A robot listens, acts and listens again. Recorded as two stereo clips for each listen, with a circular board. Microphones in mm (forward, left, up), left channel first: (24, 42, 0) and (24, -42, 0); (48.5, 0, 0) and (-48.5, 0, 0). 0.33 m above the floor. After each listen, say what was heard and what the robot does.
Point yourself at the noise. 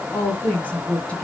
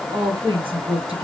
The woman speaking: 165° left. Turn 165° left.
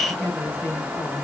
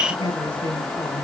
The woman speaking is now 25° left. Turn 25° left.
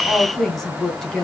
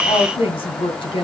Facing the woman speaking.